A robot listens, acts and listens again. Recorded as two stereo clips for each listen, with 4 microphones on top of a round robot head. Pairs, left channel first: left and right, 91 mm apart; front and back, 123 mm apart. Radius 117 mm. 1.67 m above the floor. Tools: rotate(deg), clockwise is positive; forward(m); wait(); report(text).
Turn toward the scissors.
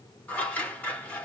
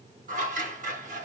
rotate(-165)
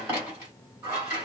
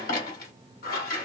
rotate(20)
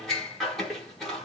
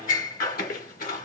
report("Found it: scissors, straight ahead.")